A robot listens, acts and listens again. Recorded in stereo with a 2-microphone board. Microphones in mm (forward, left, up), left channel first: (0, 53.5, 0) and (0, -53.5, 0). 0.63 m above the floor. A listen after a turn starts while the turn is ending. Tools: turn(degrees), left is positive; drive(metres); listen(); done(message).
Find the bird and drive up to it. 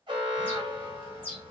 turn(degrees=15)
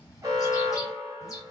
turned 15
turn(degrees=145)
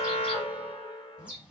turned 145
turn(degrees=-10)
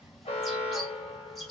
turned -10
drive(metres=1.0)
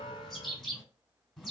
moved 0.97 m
drive(metres=1.0)
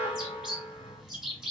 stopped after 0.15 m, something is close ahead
done("I am next to the bird.")